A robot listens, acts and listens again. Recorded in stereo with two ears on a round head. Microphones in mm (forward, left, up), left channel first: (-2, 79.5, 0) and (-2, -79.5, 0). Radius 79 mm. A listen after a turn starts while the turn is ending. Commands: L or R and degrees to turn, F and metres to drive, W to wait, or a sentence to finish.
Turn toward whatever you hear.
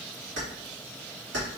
R65
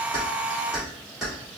Facing the keys jangling.